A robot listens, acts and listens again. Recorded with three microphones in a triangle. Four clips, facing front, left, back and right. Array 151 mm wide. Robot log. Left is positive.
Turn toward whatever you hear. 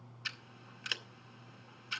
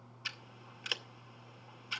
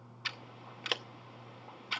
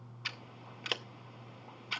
note: The scissors: 155° right.
cmd yaw -155
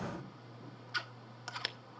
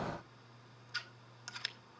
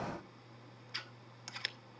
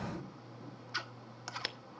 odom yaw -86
note: The scissors is now 65° right.
cmd yaw -65
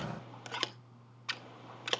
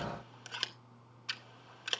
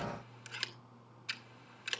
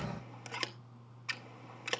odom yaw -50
note: The scissors is now 15° right.
cmd yaw -15
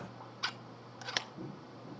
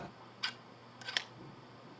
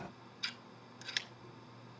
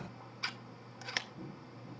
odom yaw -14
end: Found it: scissors, straight ahead.